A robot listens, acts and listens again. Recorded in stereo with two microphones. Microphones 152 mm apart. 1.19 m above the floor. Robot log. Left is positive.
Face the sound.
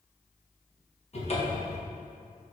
note: The cupboard door: about 45° left or 135° left.
cmd yaw +45
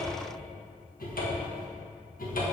note: So it is at 85° left.
cmd yaw +85
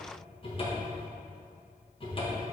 note: The cupboard door is now 40° left.
cmd yaw +40
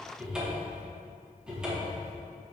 end: Facing the cupboard door.